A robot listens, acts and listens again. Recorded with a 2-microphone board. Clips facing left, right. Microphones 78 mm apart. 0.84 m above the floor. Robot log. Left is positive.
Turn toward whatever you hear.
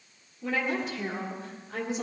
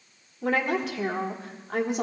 note: The woman speaking: about 65° right or 115° right.
cmd yaw -65
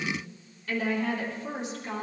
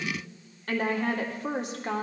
note: So it is at 65° right.
cmd yaw -65
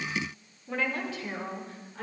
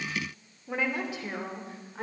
note: The woman speaking is now 25° right.
cmd yaw -25
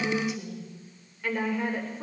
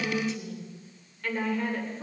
note: The woman speaking is now 10° left.
cmd yaw +10
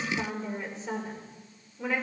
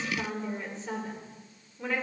end: Facing the woman speaking.